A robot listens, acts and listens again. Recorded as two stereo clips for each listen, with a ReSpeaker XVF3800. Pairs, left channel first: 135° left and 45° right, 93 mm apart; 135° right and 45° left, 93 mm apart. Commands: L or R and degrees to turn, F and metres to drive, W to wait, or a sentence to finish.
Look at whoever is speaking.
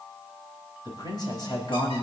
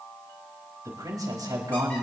L95
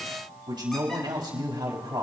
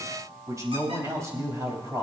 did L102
R10
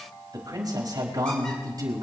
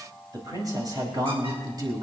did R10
Found it: a man speaking, straight ahead, over 4 m away.